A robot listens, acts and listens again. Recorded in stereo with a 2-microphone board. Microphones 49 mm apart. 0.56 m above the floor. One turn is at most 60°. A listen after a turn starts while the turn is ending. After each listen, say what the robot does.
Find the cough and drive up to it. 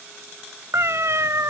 Keep listening.
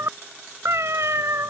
Keep listening.
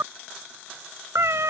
I can't make out a cough, only a cat meowing.